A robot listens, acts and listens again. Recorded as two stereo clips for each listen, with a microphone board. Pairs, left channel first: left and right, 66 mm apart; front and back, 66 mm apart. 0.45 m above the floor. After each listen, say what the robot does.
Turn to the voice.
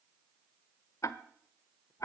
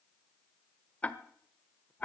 Keep listening.
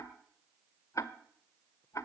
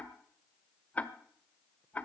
Keep listening.
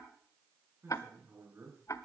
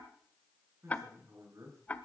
Turn 145° right.
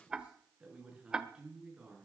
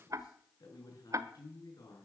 Turn 15° right.
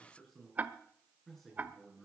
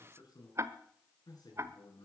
Found it: a man speaking, straight ahead, over 4 m away.